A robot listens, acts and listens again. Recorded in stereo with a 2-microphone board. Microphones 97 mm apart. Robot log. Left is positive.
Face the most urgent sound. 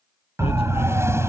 note: The siren: about 25° right or 155° right.
cmd yaw -25
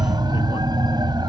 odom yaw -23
note: So it is at 125° right.
cmd yaw -125
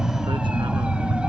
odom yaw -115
note: The siren is now 10° right.
cmd yaw -10
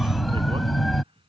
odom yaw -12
end: Found it: a siren, straight ahead.